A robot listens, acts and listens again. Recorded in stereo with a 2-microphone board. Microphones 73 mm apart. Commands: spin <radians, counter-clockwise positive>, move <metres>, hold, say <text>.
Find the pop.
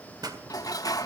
spin -1.31
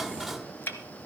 hold
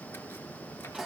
say I heard a pop, but can't make it out now. It was about straight ahead or 30° right.